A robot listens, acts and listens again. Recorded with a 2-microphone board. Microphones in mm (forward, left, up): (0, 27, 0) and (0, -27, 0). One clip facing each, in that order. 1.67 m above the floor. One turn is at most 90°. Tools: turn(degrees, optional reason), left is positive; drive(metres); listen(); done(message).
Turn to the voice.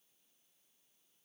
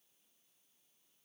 listen()
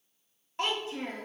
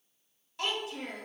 turn(degrees=30, reason="The child speaking: about 30° left or 150° left.")
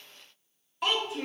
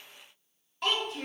done("Found it: a child speaking, straight ahead.")